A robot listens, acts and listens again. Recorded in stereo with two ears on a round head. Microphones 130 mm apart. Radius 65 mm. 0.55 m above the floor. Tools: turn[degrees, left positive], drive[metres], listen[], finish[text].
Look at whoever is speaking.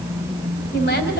Thought: The woman speaking: about 70° left or 110° left.
Action: turn[70]
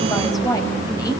Thought: So it is at 25° left.
Action: turn[25]
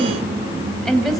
Action: finish[Facing the woman speaking, 2 to 4 m away.]